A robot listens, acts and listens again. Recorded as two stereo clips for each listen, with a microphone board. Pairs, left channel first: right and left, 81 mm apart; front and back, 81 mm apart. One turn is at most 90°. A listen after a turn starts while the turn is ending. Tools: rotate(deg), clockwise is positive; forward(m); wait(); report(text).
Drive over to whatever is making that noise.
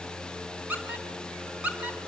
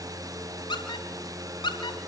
rotate(-15)
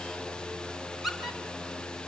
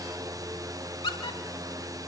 forward(1.0)
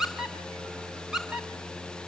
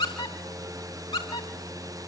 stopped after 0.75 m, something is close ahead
report("Blocked. The squeak is further on, straight ahead.")